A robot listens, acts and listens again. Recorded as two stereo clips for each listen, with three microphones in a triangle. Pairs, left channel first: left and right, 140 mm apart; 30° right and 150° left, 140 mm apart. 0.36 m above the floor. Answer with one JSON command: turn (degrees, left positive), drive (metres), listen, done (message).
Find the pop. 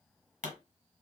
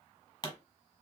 {"turn": -85}
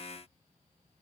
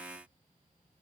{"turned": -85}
{"done": "I heard a pop from this way, but can't make it out now."}